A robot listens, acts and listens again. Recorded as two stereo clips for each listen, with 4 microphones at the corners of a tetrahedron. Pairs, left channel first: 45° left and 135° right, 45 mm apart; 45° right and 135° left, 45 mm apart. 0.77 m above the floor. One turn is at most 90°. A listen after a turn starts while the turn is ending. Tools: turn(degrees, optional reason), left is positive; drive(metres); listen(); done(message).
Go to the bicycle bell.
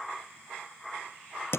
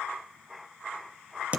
listen()
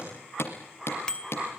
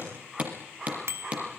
turn(degrees=90, reason="The bicycle bell: 115° left.")
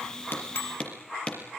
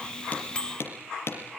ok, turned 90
turn(degrees=20, reason="The bicycle bell is now 20° left.")
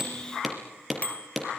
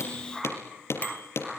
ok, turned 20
listen()
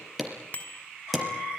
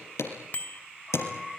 drive(metres=1.0)
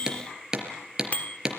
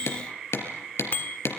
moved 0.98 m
drive(metres=1.0)
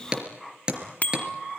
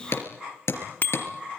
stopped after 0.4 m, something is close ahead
turn(degrees=-10, reason="The bicycle bell is now 10° right.")
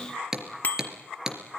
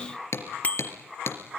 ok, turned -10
done("Arrived at the bicycle bell, straight ahead.")